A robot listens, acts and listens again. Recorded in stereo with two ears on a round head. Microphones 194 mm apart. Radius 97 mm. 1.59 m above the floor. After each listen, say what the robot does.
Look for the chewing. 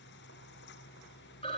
Keep listening.
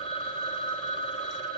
Keep listening.
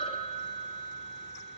I can't make out chewing to turn to.